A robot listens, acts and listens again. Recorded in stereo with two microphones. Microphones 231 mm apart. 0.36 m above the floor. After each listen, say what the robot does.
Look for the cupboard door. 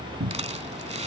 Turn 90° right.
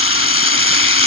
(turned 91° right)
Keep listening.
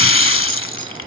Keep listening.
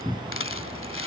Found it: a cupboard door, straight ahead.